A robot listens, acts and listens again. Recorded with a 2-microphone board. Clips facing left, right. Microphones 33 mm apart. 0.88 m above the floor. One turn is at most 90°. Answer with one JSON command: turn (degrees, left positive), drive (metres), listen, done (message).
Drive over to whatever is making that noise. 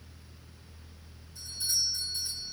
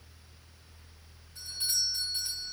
{"turn": -50}
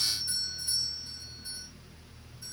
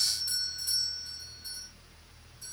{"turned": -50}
{"turn": -80}
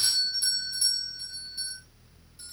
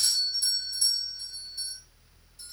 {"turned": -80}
{"turn": 20}
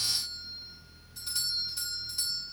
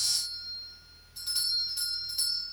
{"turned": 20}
{"drive": 1.0}
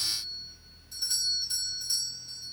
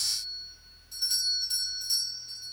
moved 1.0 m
{"drive": 1.0}
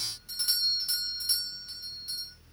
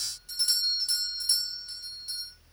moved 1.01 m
{"turn": 10}
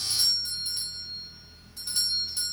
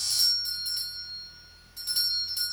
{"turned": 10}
{"drive": 1.0}
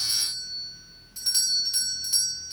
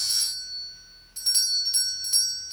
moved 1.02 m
{"drive": 1.0}
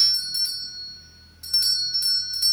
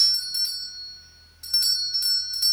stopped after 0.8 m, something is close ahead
{"done": "Arrived at the doorbell, straight ahead."}